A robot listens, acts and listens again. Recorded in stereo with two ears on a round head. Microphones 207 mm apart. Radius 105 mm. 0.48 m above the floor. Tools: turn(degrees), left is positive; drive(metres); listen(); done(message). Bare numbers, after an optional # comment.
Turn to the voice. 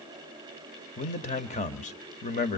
# The man speaking: about 35° left or 145° left.
turn(35)
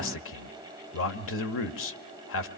# So it is at 105° left.
turn(105)
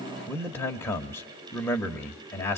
# The man speaking is now 10° left.
turn(10)
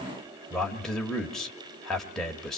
done("Found it: a man speaking, straight ahead, 1 to 2 m away.")